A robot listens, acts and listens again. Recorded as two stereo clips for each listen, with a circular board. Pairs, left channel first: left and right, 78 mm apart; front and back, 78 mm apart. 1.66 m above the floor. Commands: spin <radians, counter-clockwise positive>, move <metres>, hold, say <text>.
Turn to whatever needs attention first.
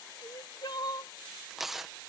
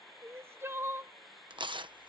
spin 2.09
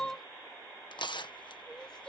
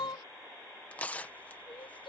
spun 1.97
spin 0.17
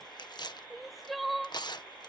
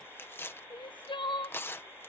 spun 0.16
say Facing the crying.